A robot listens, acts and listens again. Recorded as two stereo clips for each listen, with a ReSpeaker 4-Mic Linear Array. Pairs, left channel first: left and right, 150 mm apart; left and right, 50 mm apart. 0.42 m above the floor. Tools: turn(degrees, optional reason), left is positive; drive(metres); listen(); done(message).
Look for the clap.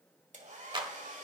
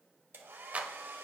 turn(degrees=-30, reason="The clap: about 30° right or 150° right.")
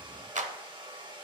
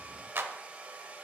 turn(degrees=-110, reason="So it is at 110° right.")
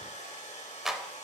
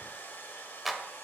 done("Facing the clap, 1 to 2 m away.")